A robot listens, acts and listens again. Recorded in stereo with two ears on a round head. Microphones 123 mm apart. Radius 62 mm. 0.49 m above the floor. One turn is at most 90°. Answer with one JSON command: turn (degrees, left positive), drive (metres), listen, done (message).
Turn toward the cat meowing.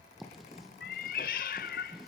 {"turn": 70}
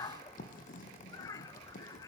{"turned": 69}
{"turn": 25}
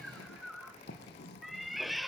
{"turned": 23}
{"done": "Found it: a cat meowing, straight ahead, 1 to 2 m away."}